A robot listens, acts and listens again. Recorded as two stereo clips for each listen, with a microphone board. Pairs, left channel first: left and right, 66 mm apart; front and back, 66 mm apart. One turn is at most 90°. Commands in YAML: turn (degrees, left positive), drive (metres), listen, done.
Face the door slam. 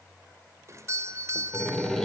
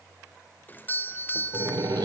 turn: 90
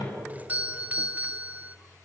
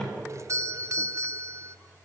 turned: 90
turn: 80
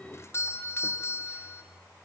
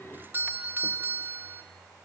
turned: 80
done: "I heard a door slam from this way, but can't make it out now."